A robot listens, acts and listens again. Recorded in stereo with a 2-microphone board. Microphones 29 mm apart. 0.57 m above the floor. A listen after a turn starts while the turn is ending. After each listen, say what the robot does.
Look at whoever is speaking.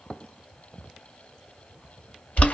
Keep listening.
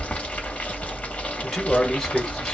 Turn 30° left.
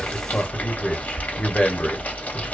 Turn 135° left.
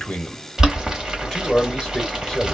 Turn 20° left.
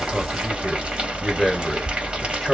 Facing the man speaking.